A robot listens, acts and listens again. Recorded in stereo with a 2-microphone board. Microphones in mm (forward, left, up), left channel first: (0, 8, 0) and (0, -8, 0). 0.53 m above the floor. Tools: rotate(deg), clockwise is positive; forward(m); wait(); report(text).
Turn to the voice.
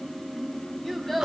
rotate(-30)
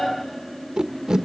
wait()
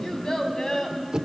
rotate(-140)
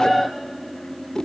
wait()
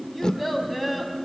report("Facing the child speaking.")